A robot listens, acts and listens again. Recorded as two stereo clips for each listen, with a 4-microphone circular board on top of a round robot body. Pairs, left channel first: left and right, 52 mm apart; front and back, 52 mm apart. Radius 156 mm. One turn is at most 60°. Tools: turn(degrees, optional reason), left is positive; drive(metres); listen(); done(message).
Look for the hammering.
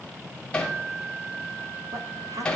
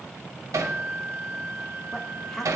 turn(degrees=60, reason="The hammering: 165° left.")
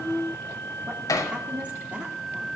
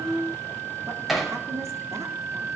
turn(degrees=60, reason="The hammering is now 90° left.")
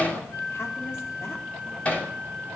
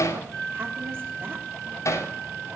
turn(degrees=20, reason="The hammering is now 20° left.")
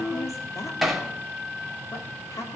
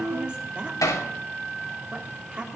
done("Facing the hammering.")